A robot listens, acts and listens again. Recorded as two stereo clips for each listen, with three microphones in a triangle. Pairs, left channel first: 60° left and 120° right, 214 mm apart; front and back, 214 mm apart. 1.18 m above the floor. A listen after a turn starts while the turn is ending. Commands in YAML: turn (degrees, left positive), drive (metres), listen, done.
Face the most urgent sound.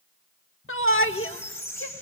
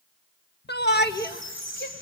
turn: 40
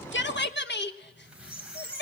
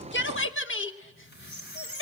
turn: 25
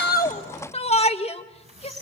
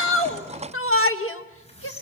done: "Found it: a shout, straight ahead, 1 to 2 m away."